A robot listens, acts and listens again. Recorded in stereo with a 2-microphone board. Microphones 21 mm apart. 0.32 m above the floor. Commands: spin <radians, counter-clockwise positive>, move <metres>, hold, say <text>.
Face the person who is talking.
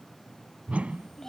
spin 0.35
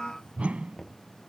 hold
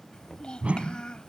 spin 2.36
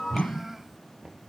spin -0.26
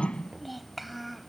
say Found it: a child speaking, straight ahead.